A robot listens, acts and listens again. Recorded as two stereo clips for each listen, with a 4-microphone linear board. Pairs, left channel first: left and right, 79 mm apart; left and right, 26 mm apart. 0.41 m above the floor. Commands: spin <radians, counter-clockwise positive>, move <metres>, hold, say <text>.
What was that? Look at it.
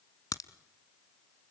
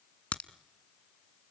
spin 0.96
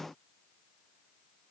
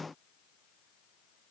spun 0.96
hold
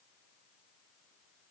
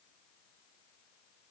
say I heard a crack, but can't make it out now. It was about straight ahead or 70° left.